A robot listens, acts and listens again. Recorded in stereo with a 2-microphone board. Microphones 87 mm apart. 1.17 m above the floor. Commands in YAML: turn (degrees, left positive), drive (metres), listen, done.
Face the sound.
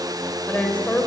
turn: 30
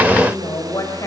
turn: 140
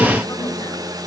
listen: true
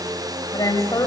turn: 45
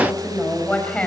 turn: 15
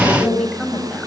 turn: 10
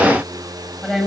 done: "Found it: a woman speaking, straight ahead."